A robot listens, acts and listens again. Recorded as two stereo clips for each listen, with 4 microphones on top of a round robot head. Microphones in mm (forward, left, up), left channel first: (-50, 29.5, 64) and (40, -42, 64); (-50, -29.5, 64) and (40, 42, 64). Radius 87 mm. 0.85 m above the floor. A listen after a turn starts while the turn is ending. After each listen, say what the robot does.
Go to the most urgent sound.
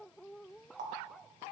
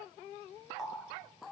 Keep listening.
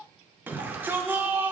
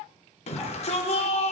Turn 110° right.
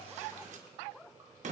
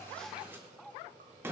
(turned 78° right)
Turn 35° right.
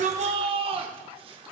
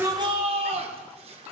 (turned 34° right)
Drive 1.0 m forward.
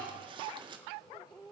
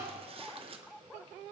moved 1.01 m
Keep listening.
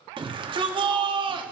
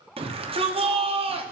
Drive 1.0 m forward.
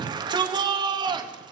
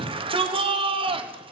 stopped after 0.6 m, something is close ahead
Arrived at the shout, straight ahead.